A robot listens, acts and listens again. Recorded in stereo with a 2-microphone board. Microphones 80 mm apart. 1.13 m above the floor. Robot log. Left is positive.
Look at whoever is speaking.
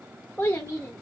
note: The child speaking: about 35° left or 145° left.
cmd yaw +35
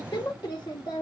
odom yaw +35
note: So it is at 110° left.
cmd yaw +110
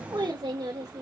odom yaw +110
note: The child speaking is now 60° right.
cmd yaw -60
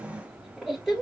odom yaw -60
end: Facing the child speaking, 2 to 4 m away.